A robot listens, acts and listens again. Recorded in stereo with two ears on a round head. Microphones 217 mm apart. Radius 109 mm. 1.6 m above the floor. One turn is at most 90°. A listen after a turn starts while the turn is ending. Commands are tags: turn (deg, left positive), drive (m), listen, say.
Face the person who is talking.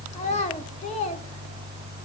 <turn deg="25"/>
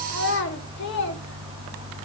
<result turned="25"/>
<turn deg="90"/>
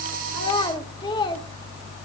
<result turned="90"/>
<turn deg="20"/>
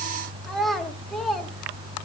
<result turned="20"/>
<say>Facing the child speaking, 1 to 2 m away.</say>